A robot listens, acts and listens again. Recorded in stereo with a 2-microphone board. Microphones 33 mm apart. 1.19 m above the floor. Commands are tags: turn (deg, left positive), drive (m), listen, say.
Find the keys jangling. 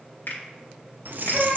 <turn deg="-65"/>
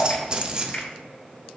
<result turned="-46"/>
<turn deg="-30"/>
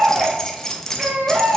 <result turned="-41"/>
<turn deg="15"/>
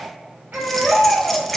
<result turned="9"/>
<say>Facing the keys jangling.</say>